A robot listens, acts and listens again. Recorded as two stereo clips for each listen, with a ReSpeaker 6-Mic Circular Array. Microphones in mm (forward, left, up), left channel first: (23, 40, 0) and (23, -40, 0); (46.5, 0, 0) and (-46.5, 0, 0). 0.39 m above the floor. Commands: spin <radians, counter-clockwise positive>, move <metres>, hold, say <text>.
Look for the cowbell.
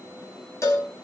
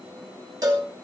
spin 2.36
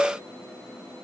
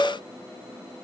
spin 0.17
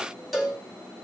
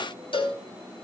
say Facing the cowbell.